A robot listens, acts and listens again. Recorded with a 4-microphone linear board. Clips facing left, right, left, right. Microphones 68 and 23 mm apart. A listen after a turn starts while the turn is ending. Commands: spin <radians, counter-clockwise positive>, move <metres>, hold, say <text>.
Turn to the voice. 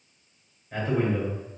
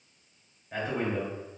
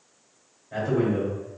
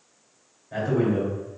spin -0.52
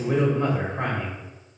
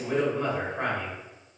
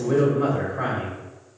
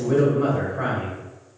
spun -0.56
spin 0.52
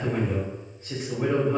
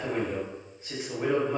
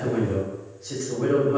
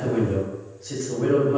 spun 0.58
say Facing the man speaking.